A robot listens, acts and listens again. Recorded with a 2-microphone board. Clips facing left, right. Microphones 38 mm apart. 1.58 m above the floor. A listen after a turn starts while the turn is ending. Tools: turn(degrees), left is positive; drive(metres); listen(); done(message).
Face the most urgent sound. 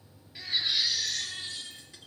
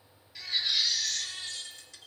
turn(degrees=25)
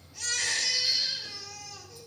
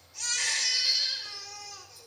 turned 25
done("Found it: a baby crying, straight ahead.")